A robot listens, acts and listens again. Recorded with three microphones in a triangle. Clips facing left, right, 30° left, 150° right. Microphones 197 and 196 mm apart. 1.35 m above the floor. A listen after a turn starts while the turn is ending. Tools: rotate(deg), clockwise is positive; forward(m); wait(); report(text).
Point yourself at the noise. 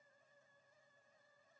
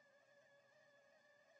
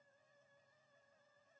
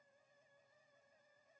wait()
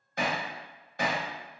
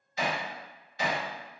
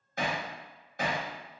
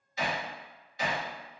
rotate(-60)
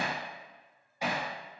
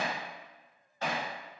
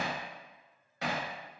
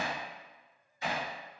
rotate(-15)
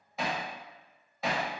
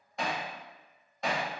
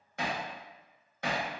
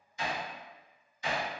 report("Found it: hammering, straight ahead.")